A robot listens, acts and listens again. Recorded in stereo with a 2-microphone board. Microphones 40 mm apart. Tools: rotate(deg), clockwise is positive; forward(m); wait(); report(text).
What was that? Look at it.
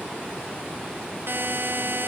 rotate(65)
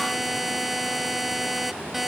report("Found it: a buzzer, straight ahead.")